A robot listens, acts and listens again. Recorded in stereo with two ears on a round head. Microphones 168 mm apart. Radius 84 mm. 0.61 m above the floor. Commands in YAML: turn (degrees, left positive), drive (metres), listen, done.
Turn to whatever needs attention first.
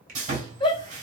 turn: 25
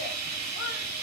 listen: true
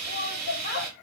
turn: 125
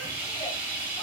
listen: true
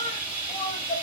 turn: 30
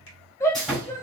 turn: 15
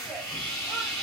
listen: true
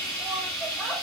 listen: true
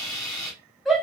done: "Found it: a shout, straight ahead."